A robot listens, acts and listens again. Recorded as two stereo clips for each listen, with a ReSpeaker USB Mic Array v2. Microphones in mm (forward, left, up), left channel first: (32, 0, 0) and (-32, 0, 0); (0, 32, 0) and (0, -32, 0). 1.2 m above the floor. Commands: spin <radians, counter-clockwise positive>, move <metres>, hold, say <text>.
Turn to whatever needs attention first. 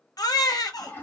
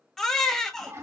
spin 0.17
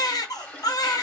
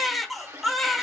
say Found it: a baby crying, straight ahead.